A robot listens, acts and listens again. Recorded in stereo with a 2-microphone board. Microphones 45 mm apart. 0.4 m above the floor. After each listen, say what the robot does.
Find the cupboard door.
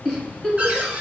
Turn 30° right.
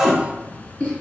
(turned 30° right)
Facing the cupboard door, 1 to 2 m away.